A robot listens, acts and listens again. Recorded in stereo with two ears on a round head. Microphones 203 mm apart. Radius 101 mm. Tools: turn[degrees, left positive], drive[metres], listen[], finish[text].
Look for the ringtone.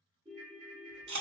Thought: The ringtone: about 20° right or 160° right.
Action: turn[-20]
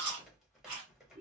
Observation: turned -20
Action: listen[]
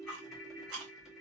Thought: So it is at 140° right.
Action: turn[-140]
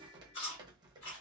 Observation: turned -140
Action: listen[]
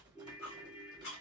Thought: The ringtone is now 20° left.
Action: turn[20]
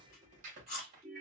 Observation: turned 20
Action: finish[Facing the ringtone.]